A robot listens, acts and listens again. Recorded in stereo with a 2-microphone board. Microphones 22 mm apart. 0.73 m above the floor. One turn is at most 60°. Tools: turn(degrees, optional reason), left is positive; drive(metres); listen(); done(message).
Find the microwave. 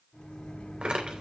turn(degrees=45, reason="The microwave: about 45° left or 135° left.")
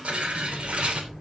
done("Found it: a microwave, straight ahead, over 4 m away.")